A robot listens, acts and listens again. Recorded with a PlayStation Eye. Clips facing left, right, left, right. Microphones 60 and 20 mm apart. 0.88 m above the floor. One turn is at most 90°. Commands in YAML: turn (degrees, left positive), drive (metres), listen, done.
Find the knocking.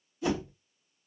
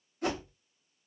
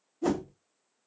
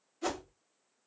turn: 45
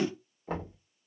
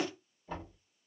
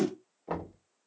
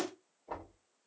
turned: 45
turn: 90
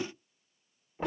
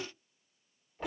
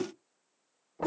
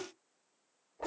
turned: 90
turn: 15
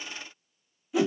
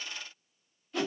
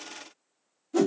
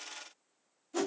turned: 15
listen: true
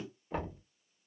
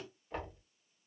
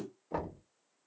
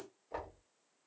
done: "Found it: knocking, straight ahead, 1 to 2 m away."